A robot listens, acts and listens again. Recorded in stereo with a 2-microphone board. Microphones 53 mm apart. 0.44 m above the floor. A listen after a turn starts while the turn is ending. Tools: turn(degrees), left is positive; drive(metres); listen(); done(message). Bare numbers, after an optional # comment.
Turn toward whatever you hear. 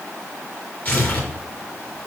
# The tearing paper: about 35° left or 145° left.
turn(35)
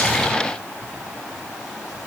listen()
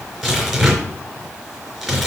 done("Facing the tearing paper.")